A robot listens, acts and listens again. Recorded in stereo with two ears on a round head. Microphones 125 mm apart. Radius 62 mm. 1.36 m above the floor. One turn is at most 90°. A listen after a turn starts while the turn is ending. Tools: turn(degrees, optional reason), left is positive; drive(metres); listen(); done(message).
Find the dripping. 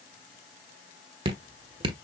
turn(degrees=-35, reason="The dripping: about 35° right or 145° right.")
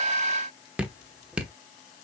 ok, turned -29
turn(degrees=-10, reason="So it is at 10° right.")
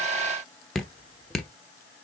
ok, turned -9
done("Facing the dripping, 1 to 2 m away.")